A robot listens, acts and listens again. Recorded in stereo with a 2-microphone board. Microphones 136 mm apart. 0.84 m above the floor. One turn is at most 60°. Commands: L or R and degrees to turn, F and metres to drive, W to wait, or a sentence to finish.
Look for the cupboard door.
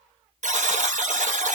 W
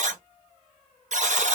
W
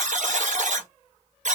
I can't make out a cupboard door, only a buzzer.